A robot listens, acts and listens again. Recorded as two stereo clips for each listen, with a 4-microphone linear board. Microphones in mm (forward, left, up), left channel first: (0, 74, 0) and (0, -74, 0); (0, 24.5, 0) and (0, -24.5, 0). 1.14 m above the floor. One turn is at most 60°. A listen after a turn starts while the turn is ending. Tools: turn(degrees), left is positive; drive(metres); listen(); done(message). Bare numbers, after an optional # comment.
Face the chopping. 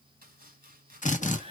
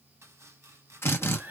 turn(-60)
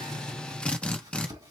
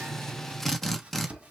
# So it is at 25° right.
turn(-25)
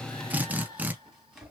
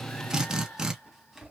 done("Facing the chopping.")